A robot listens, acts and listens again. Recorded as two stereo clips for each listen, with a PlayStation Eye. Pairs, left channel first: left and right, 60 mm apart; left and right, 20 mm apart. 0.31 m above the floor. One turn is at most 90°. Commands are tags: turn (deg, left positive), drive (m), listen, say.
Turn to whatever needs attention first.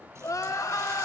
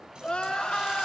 <turn deg="70"/>
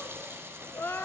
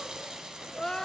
<turn deg="40"/>
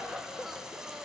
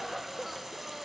<say>Facing the crying.</say>